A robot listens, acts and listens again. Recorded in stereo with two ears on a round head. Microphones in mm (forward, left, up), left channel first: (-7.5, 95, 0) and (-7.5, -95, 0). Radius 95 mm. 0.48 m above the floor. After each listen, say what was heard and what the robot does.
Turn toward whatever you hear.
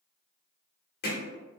The hammering: about 45° left or 135° left. Turn 45° left.
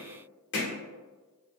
So it is at 75° left. Turn 75° left.
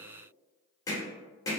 The hammering is now 20° left. Turn 20° left.
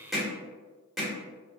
Facing the hammering, 1 to 2 m away.